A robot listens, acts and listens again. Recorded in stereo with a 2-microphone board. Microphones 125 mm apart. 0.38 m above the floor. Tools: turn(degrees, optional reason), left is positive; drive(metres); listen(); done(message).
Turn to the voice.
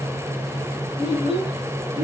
turn(degrees=-60, reason="The child speaking: about 60° right or 120° right.")
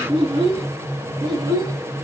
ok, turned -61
turn(degrees=-35, reason="So it is at 35° right.")
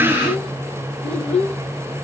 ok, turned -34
turn(degrees=10, reason="The child speaking is now 10° left.")
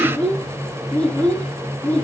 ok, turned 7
turn(degrees=15, reason="The child speaking is now 15° left.")
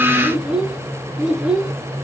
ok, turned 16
done("Facing the child speaking, 2 to 4 m away.")